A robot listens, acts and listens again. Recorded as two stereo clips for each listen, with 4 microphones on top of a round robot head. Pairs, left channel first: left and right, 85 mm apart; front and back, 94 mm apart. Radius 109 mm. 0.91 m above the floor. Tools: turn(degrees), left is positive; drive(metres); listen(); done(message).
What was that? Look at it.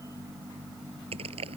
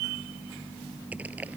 turn(degrees=-100)
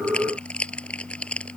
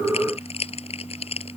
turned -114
turn(degrees=15)
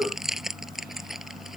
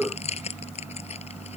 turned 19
done("Facing the crushing.")